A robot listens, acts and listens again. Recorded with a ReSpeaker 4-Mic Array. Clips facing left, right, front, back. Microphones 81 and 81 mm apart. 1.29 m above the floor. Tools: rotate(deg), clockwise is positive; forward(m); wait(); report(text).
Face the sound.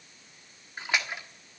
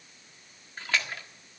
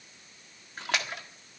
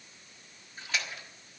rotate(-20)
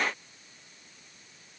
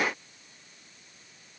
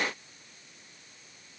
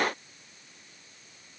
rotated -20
report("I heard a splash from this way, but can't make it out now.")